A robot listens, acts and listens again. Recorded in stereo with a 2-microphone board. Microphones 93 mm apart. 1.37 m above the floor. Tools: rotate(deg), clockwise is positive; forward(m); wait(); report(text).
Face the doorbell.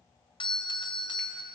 rotate(-60)
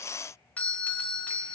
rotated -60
rotate(-20)
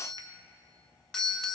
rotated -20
rotate(-10)
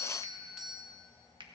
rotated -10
report("Found it: a doorbell, straight ahead, under 1 m away.")